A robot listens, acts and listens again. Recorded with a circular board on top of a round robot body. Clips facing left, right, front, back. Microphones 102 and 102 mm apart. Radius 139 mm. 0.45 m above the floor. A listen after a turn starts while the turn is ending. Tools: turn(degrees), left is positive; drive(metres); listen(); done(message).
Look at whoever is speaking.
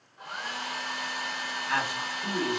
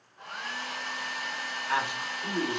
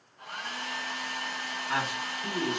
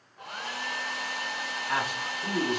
turn(degrees=-160)
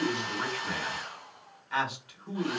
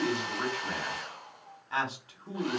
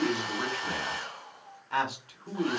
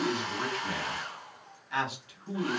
turn(degrees=-35)
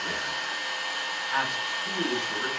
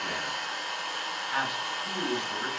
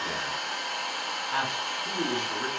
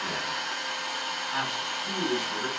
done("Facing the man speaking, 1 to 2 m away.")